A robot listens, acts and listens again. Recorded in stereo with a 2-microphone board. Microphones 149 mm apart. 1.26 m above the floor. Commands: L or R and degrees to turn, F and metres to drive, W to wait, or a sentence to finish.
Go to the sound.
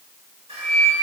R45
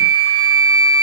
R90
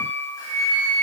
L25
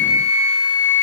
F1.0
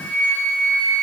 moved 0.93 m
L10
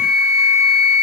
F1.0
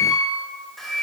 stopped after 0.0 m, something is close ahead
Arrived at the flute, straight ahead.